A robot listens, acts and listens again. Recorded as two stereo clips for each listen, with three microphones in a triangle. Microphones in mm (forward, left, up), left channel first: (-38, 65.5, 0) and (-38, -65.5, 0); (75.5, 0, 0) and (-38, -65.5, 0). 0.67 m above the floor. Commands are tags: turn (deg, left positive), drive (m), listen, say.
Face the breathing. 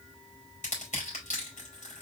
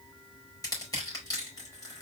<listen/>
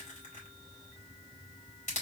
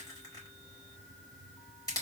<listen/>
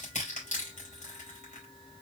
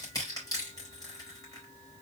<say>I can't make out breathing to turn to.</say>